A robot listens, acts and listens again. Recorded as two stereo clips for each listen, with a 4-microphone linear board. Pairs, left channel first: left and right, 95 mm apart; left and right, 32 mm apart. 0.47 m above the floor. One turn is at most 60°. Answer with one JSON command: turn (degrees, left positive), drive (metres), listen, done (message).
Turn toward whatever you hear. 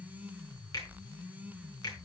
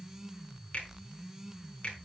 {"turn": 40}
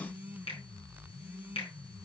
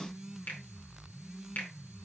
{"turn": 60}
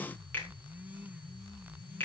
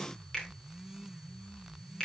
{"turn": 20}
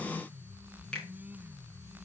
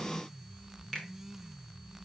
{"turn": 10}
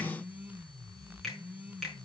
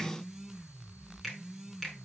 {"done": "Facing the finger snap, over 4 m away."}